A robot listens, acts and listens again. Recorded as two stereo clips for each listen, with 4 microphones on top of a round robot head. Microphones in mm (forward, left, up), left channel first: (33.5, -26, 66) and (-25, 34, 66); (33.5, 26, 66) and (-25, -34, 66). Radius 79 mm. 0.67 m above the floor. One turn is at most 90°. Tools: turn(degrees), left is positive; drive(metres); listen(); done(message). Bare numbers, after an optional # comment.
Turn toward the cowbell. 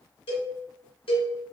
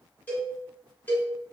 # The cowbell: 25° right.
turn(-25)
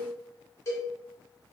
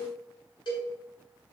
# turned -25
# The cowbell is now 10° left.
turn(10)
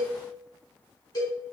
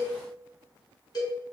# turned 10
done("Facing the cowbell.")